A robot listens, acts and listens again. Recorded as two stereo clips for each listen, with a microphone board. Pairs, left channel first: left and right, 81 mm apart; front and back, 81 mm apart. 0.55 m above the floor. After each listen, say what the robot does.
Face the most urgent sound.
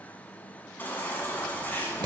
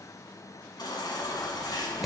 Turn 25° left.
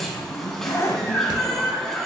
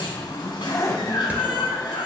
Facing the baby crying, 1 to 2 m away.